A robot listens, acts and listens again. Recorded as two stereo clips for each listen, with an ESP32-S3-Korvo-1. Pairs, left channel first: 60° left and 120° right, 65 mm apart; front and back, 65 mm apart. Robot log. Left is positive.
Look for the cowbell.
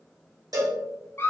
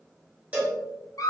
note: The cowbell: 115° right.
cmd yaw -115
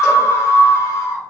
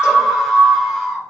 cmd idle
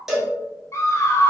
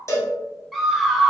note: The cowbell is now 35° right.
cmd yaw -35
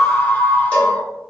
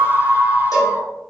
cmd idle
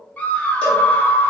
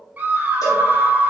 cmd idle
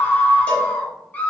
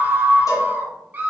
end: I heard a cowbell from this way, but can't make it out now.